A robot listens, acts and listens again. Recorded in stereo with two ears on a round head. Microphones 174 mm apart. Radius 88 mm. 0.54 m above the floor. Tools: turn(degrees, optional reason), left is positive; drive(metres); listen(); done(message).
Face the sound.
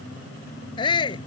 turn(degrees=25, reason="The shout: about 25° left or 155° left.")
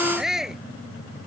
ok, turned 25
done("Facing the shout.")